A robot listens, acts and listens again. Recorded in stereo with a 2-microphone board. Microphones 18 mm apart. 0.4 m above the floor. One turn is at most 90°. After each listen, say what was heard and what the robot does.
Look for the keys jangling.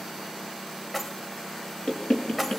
Turn 30° left.
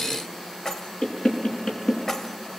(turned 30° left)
So it is at 145° left. Turn 90° left.
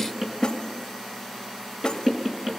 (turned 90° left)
Nothing new. It was at 55° left. Turn 55° left.
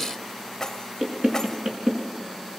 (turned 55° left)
The keys jangling is now 30° left. Turn 30° left.
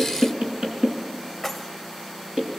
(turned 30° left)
Facing the keys jangling, 1 to 2 m away.